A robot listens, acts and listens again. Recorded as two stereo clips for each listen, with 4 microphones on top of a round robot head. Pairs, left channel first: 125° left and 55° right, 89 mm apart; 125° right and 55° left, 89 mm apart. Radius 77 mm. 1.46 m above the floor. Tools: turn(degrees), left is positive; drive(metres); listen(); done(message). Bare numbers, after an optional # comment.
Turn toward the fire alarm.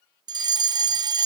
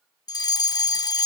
# The fire alarm: 90° right.
turn(-90)
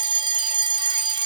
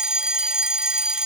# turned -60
# The fire alarm is now 25° right.
turn(-25)
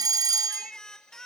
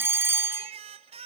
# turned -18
# The fire alarm is now 10° right.
turn(-10)
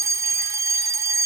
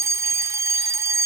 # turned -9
done("Found it: a fire alarm, straight ahead.")